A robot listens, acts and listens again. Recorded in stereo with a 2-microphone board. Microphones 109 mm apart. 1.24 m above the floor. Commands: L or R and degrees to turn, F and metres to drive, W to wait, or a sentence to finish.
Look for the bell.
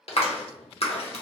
W
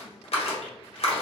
W
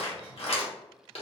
I can't make out a bell to turn to.